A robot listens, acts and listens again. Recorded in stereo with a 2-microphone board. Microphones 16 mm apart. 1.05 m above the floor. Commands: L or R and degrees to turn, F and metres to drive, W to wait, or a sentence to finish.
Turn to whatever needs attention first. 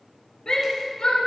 L70
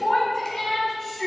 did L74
L35
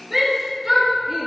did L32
Facing the shout.